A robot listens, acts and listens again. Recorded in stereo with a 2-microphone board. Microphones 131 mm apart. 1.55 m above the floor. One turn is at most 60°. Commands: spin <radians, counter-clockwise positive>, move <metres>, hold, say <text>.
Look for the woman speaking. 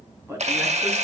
spin -0.35
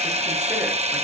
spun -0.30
hold
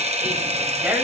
spin -0.52
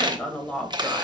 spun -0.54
say Found it: a woman speaking, straight ahead, 1 to 2 m away.